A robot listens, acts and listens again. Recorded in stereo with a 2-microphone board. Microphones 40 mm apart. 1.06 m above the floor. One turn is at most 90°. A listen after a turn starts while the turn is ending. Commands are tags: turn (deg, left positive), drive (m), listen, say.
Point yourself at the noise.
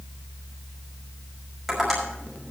<turn deg="-30"/>
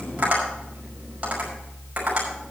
<turn deg="-90"/>
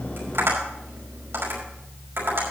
<turn deg="-85"/>
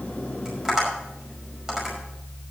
<turn deg="-10"/>
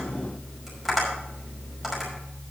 <say>Facing the tapping.</say>